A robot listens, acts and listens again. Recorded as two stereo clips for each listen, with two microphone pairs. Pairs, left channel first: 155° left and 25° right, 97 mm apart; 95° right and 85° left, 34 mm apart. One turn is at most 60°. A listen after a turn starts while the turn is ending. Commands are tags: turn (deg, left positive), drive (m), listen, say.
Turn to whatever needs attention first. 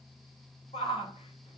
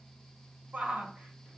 <turn deg="60"/>
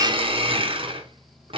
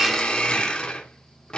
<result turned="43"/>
<turn deg="60"/>
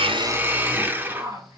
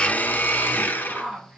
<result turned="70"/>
<turn deg="30"/>
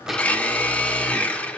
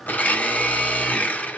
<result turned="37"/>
<turn deg="-10"/>
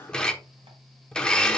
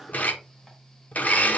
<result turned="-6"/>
<listen/>
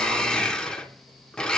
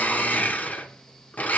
<say>Facing where the shout came from. I can't hear it now.</say>